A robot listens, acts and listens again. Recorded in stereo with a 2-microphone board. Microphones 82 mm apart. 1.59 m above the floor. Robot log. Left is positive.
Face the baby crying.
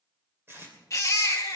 note: The baby crying: about 40° left or 140° left.
cmd yaw +40
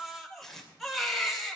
end: Found it: a baby crying, straight ahead.